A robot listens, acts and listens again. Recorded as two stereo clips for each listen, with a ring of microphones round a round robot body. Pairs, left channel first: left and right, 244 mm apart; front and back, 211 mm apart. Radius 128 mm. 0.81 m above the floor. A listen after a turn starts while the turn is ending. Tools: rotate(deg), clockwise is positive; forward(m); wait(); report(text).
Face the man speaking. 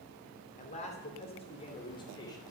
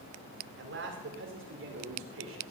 rotate(-165)
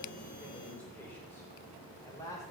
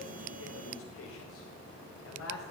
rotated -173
rotate(-15)
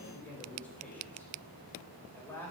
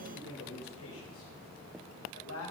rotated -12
rotate(-10)
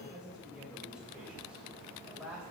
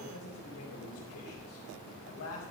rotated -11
report("Found it: a man speaking, straight ahead, over 4 m away.")